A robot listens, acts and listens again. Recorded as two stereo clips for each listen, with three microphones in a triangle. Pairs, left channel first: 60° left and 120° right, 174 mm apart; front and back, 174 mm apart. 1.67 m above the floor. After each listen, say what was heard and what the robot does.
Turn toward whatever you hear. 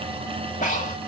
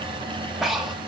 The breathing: 90° left. Turn 90° left.
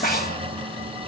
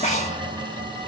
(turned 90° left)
The breathing is now 40° left. Turn 40° left.
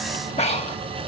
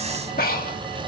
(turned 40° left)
The breathing is now 15° left. Turn 15° left.
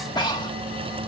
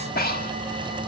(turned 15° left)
Found it: breathing, straight ahead, 1 to 2 m away.